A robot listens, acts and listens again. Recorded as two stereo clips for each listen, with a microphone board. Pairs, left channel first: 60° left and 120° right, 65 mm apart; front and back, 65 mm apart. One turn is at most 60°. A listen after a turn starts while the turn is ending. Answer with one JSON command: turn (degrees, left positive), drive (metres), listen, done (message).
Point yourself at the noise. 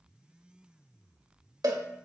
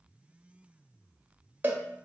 {"turn": -60}
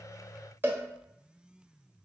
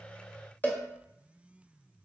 {"turn": -60}
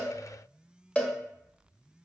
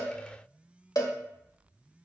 {"turn": -10}
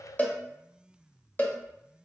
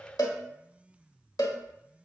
{"done": "Facing the cowbell, 1 to 2 m away."}